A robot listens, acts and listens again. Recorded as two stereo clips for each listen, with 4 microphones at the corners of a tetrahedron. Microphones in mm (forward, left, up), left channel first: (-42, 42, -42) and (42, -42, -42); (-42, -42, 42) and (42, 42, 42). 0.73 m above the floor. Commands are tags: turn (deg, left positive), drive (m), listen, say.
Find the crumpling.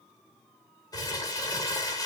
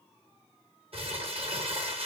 <turn deg="80"/>
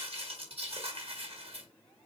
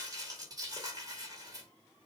<turn deg="-10"/>
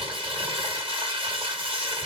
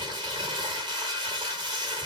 <say>Found it: crumpling, straight ahead.</say>